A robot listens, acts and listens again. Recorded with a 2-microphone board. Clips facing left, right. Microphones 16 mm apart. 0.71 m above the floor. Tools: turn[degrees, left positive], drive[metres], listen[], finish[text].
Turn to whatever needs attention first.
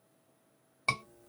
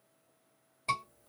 Thought: The scream: about 60° left or 120° left.
Action: turn[60]
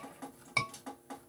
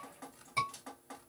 Thought: So it is at 50° left.
Action: turn[50]
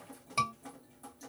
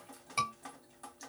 Action: finish[Found it: a scream, straight ahead, 1 to 2 m away.]